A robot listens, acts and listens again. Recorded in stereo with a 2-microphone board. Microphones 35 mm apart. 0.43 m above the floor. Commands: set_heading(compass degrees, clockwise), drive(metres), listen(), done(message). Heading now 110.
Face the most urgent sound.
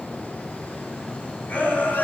set_heading(40)
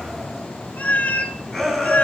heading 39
set_heading(29)
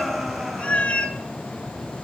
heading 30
done("Found it: a shout, straight ahead.")